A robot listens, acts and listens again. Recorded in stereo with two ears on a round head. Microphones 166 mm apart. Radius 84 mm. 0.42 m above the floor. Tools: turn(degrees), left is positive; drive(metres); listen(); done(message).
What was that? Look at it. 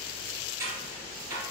turn(degrees=-15)
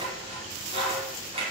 turn(degrees=-145)
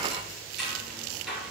done("Found it: scissors, straight ahead.")